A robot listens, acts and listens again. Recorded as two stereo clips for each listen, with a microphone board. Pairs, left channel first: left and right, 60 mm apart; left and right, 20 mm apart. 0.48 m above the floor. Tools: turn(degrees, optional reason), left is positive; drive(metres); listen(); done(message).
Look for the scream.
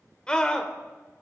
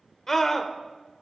turn(degrees=30)
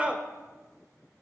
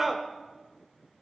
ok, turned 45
turn(degrees=-30, reason="So it is at 30° right.")
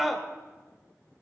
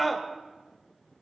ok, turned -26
done("Facing the scream, 1 to 2 m away.")